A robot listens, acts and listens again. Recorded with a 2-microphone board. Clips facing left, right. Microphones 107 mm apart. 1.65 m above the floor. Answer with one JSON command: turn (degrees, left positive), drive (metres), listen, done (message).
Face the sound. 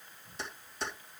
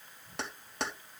{"turn": -75}
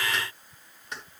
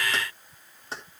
{"turn": -35}
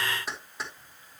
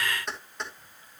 {"done": "Facing the keys jangling, over 4 m away."}